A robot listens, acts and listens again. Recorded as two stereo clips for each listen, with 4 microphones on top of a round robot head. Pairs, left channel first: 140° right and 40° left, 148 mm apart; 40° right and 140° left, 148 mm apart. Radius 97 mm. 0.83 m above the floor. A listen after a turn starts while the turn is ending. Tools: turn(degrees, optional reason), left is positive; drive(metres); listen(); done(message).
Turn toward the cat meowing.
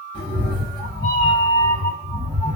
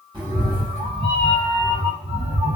turn(degrees=-175, reason="The cat meowing: 175° right.")
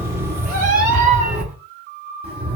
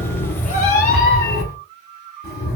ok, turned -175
turn(degrees=-20, reason="The cat meowing is now 20° right.")
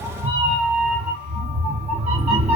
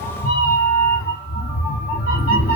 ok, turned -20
turn(degrees=-10, reason="The cat meowing is now 10° right.")
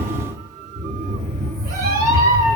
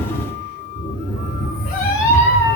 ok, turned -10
done("Facing the cat meowing, 1 to 2 m away.")